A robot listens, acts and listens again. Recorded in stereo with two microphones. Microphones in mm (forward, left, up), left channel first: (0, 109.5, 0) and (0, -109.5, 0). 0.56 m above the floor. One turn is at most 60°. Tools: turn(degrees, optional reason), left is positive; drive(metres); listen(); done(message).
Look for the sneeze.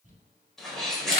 turn(degrees=30)
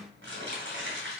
listen()
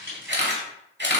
done("I heard a sneeze, but can't make it out now. It was about 30° right or 150° left.")